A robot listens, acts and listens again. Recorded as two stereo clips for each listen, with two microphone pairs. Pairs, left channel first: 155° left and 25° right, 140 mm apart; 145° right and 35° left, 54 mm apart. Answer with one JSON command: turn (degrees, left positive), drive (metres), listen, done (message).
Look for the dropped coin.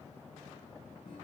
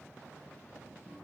{"listen": true}
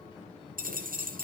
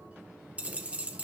{"turn": -25}
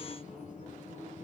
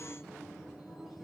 {"done": "I heard a dropped coin from this way, but can't make it out now."}